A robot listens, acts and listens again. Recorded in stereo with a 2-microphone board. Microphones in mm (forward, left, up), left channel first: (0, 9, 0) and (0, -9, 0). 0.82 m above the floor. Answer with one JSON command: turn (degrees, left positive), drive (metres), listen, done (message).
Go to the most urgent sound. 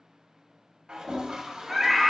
{"turn": -30}
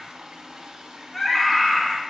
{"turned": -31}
{"turn": 20}
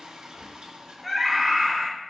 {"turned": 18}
{"drive": 1.0}
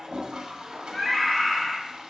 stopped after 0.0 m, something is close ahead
{"done": "Blocked. The scream is further on, straight ahead."}